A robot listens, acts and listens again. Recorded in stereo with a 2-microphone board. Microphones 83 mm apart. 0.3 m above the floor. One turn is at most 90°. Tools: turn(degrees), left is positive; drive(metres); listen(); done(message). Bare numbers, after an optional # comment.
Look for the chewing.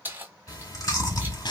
# The chewing: about 45° left or 135° left.
turn(45)
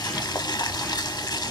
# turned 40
listen()
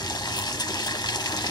listen()
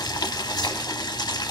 done("I heard chewing, but can't make it out now. It was about 5° left or 95° left.")